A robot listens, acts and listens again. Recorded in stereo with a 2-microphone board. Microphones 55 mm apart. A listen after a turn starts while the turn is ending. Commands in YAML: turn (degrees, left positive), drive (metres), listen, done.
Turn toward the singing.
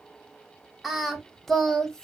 turn: 30
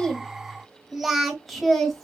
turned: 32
turn: 30
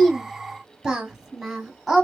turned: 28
turn: 30
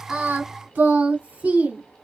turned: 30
turn: -20
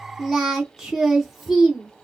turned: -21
done: "Facing the singing, 2 to 4 m away."